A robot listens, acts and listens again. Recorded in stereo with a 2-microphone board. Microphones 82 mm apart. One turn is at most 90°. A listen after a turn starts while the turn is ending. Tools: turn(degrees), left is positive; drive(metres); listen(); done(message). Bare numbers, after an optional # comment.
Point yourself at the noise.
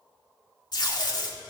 # The tape being pulled: about 55° left or 125° left.
turn(55)
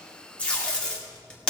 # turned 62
# So it is at 15° left.
turn(15)
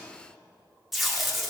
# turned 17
done("Facing the tape being pulled, 2 to 4 m away.")